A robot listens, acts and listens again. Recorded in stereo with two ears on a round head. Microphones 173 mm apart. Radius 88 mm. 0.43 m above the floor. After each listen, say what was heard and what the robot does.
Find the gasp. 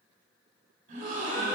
The gasp: about 40° right or 140° right. Turn 40° right.
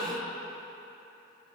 Facing the gasp.